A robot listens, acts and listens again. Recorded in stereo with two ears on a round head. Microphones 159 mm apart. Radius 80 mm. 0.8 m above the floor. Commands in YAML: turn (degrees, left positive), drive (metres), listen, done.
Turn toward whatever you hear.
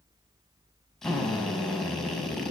turn: 30
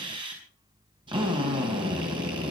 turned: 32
turn: -30
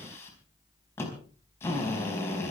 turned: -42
turn: 15
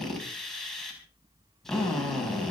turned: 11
done: "Facing the drill, over 4 m away."